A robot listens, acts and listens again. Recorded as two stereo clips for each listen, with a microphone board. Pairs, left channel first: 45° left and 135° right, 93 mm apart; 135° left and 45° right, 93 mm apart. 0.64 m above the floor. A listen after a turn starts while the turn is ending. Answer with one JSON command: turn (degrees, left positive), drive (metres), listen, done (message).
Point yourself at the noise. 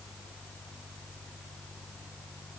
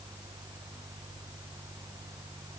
{"listen": true}
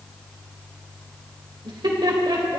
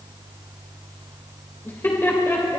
{"turn": -170}
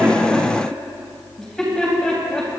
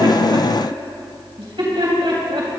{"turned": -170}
{"turn": -40}
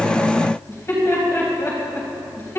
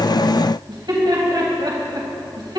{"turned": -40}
{"turn": -15}
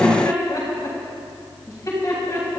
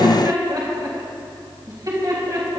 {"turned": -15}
{"done": "Found it: laughter, straight ahead, 2 to 4 m away."}